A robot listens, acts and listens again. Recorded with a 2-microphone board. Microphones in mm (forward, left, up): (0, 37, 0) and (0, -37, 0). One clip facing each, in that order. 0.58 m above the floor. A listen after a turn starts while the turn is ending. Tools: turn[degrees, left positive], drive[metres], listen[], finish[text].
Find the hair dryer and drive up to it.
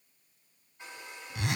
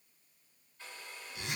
Thought: The hair dryer: about 15° left or 165° left.
Action: turn[15]
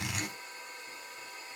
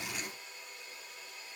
Thought: So it is at 150° left.
Action: turn[150]
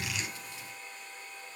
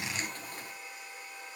Thought: The hair dryer is now 10° right.
Action: turn[-10]
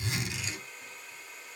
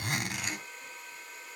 Action: drive[1.0]
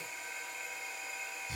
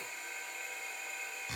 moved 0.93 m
Action: drive[1.0]
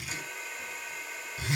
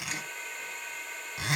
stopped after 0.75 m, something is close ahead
Action: finish[I am next to the hair dryer.]